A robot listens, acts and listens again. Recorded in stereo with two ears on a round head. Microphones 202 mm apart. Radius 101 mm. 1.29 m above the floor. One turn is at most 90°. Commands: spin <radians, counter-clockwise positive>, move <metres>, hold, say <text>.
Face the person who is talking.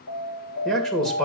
spin 0.52
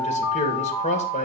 spin 1.57
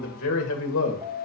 spin 1.13
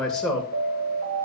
say Facing the man speaking.